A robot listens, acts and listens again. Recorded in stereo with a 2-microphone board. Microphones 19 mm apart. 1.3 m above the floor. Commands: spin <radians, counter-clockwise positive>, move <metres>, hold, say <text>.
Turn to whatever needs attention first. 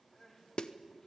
spin 0.61
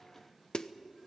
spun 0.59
hold
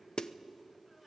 hold
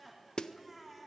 say Found it: crying, straight ahead.